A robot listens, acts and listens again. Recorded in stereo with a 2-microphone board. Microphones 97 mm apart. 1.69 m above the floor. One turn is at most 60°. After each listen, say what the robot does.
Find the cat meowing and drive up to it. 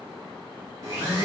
Keep listening.
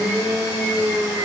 Keep listening.
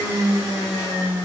I can't make out a cat meowing, only a blender.